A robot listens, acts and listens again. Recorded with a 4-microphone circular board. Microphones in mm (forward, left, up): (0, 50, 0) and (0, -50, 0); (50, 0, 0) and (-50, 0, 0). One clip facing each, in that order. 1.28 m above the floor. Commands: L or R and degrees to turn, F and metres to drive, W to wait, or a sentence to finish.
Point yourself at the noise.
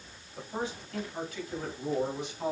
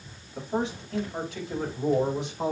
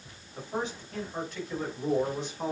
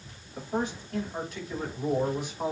R95
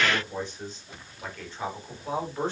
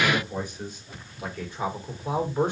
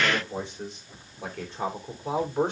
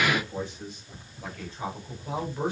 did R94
R15
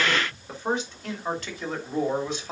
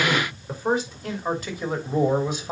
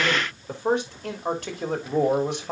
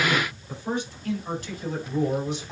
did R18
R10
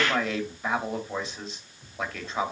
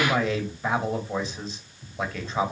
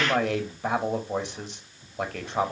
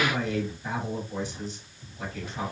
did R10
Facing the man speaking, 2 to 4 m away.